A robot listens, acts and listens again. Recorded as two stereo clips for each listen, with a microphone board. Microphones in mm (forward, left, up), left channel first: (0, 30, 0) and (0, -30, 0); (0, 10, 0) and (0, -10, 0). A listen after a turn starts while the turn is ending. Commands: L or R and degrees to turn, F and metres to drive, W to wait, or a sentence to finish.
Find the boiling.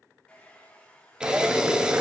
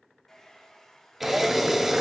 R30
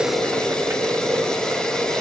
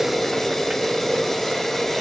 R120
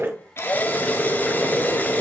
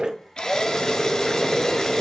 L10
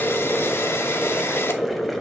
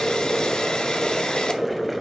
Facing the boiling.